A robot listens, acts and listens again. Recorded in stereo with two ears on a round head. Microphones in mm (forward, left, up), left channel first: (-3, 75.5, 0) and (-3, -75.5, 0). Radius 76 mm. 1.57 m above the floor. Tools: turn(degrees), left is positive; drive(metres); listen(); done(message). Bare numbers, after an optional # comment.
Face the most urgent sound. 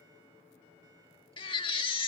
# The baby crying: about 30° left or 150° left.
turn(30)
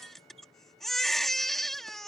done("Found it: a baby crying, straight ahead.")